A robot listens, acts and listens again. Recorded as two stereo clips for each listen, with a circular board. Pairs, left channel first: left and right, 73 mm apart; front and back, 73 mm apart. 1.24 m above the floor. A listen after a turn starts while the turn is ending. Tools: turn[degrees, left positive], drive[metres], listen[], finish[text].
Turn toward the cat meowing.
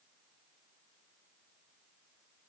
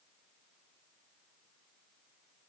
Action: listen[]
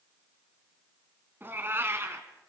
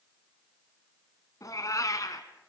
Thought: The cat meowing: 35° right.
Action: turn[-35]
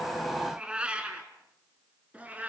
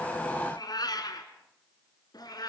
Thought: The cat meowing is now 20° right.
Action: turn[-20]
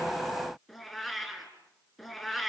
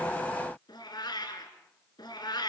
Action: finish[Facing the cat meowing.]